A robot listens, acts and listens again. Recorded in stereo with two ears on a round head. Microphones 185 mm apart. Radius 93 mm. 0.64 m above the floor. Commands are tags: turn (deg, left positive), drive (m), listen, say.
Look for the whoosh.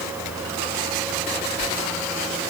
<listen/>
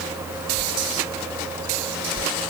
<turn deg="-40"/>
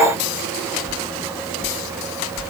<say>Found it: a whoosh, straight ahead.</say>